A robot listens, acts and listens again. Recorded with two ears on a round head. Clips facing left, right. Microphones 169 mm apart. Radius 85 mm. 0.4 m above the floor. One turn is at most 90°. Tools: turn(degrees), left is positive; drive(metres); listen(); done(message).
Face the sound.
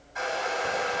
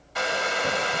turn(degrees=-75)
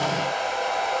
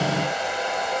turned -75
turn(degrees=-20)
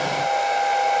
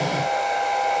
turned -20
done("Facing the hair dryer.")